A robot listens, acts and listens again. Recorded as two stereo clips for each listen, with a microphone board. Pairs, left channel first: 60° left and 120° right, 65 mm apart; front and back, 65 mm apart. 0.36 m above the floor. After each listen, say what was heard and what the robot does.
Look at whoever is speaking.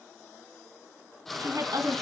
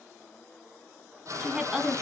The woman speaking: 105° right. Turn 105° right.
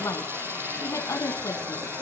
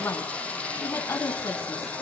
The woman speaking is now 40° left. Turn 40° left.
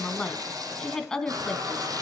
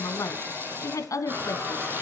The woman speaking is now 20° right. Turn 20° right.
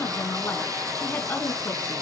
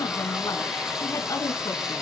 Facing the woman speaking.